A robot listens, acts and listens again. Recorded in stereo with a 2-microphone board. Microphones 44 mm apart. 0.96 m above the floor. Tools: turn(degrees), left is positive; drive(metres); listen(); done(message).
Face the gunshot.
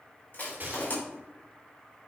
turn(degrees=-45)
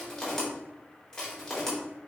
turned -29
listen()
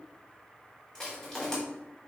done("I heard a gunshot, but can't make it out now. It was about 15° right or 105° right.")